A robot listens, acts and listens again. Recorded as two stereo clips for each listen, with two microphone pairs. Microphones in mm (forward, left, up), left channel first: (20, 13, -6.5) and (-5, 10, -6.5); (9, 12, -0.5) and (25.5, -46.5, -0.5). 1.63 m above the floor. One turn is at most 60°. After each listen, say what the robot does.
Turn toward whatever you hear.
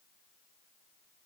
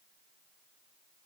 Keep listening.
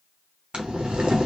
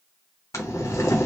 Turn 60° left.
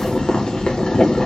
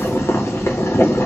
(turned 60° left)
Turn 60° left.
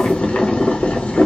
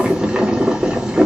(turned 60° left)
Facing the boiling, 1 to 2 m away.